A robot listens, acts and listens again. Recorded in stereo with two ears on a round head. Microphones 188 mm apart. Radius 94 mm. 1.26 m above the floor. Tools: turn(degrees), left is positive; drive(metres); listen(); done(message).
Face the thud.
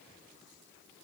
listen()
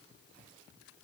listen()
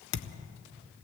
turn(degrees=70)
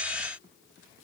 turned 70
listen()
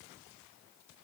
done("I heard a thud, but can't make it out now. It was about straight ahead or 40° left.")